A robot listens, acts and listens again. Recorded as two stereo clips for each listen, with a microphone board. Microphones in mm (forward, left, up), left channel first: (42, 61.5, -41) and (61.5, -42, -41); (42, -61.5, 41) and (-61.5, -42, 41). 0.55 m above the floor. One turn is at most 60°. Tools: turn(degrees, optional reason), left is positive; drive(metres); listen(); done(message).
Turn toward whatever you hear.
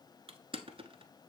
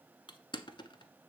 turn(degrees=-50, reason="The crushing: 50° right.")
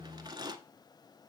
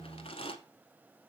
turn(degrees=-30, reason="The crushing is now 30° right.")
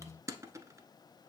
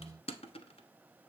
turn(degrees=-20, reason="The crushing is now 20° right.")
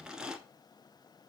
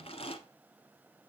done("Found it: crushing, straight ahead.")